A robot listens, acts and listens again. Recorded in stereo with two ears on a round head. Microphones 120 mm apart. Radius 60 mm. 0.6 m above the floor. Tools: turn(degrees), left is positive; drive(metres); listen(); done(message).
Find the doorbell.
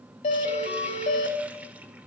turn(degrees=55)
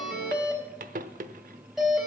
done("Facing the doorbell, over 4 m away.")